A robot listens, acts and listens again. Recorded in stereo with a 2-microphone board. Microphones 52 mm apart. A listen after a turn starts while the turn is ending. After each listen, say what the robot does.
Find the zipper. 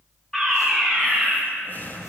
Keep listening.
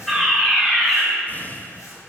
Keep listening.
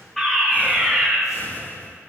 I can't make out a zipper, only a fire alarm and breathing.